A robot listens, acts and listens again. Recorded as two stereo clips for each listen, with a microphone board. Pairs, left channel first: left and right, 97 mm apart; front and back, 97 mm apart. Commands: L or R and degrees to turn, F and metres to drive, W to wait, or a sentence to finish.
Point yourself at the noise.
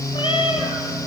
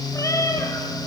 L60
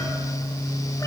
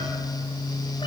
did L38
L20
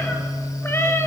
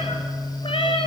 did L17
L25
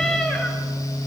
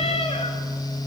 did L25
L10
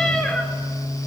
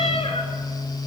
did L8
L10
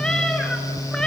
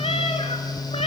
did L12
L10
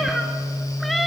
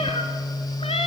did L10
Found it: a cat meowing, straight ahead.